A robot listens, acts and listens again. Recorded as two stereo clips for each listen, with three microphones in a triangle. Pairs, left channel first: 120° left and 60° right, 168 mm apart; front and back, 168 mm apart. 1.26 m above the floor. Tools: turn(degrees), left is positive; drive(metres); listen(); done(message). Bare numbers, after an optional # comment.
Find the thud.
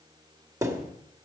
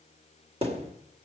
# The thud: 130° right.
turn(-130)
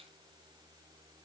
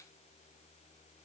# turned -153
# Nothing new. It was at 25° left.
turn(25)
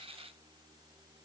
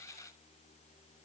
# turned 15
# Nothing new. It was at 10° left.
turn(10)
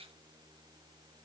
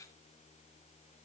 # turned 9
done("Facing where the thud came from. I can't hear it now.")